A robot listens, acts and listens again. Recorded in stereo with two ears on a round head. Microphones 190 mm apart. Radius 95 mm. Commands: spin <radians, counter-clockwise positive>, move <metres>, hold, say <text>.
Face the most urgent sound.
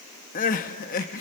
spin 0.70
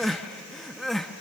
say Facing the crying.